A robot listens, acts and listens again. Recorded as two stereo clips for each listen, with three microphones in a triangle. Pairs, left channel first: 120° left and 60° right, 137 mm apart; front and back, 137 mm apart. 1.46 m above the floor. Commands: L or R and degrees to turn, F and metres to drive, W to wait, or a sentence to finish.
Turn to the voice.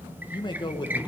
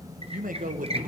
L175
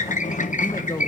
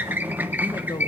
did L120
L55
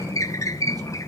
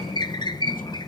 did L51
W
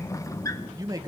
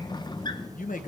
Found it: a man speaking, straight ahead, 1 to 2 m away.